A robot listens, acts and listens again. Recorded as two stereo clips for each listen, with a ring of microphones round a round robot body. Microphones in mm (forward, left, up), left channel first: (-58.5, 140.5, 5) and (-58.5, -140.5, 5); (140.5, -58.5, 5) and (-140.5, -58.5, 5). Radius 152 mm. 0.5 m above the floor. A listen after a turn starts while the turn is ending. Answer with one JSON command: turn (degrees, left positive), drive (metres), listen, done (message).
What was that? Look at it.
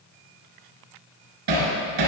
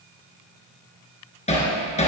{"turn": -65}
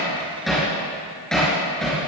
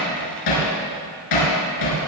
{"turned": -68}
{"done": "Found it: hammering, straight ahead."}